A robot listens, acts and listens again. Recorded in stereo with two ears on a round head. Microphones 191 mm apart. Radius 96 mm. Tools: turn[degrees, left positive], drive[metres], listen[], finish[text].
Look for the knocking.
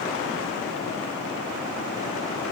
Action: listen[]
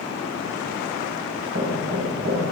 Thought: The knocking: about 65° right or 115° right.
Action: turn[-65]
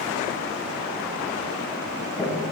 Action: finish[Found it: knocking, straight ahead, over 4 m away.]